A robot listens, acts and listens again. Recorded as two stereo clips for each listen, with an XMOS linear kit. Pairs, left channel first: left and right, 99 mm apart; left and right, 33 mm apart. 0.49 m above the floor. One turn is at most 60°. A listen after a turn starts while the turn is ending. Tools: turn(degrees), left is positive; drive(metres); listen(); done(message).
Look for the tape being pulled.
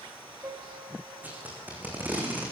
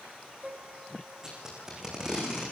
turn(degrees=-15)
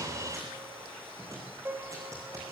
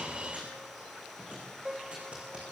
turn(degrees=-60)
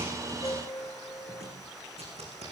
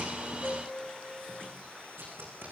turn(degrees=-60)
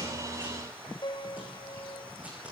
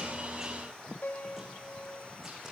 turn(degrees=-25)
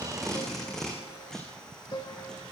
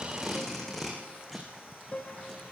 done("Found it: tape being pulled, straight ahead, over 4 m away.")